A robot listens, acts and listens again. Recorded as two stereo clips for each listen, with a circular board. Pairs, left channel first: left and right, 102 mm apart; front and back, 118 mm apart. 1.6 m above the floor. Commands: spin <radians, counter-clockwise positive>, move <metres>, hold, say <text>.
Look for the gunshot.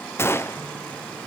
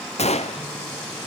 spin 0.44
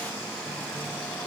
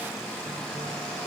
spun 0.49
say Facing where the gunshot came from. I can't hear it now.